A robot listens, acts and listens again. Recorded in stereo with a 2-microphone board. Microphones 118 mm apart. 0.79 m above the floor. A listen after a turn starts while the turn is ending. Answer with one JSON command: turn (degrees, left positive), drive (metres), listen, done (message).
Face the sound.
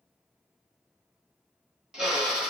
{"turn": -30}
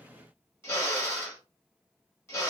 {"turn": 25}
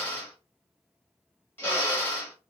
{"turn": 20}
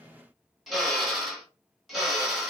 {"done": "Facing the drill, 1 to 2 m away."}